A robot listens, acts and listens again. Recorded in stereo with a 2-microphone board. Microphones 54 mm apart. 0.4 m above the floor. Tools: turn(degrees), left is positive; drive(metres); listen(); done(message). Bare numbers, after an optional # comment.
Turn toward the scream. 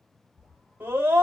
# The scream: about 45° right or 135° right.
turn(-45)
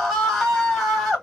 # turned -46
done("Found it: a scream, straight ahead, 2 to 4 m away.")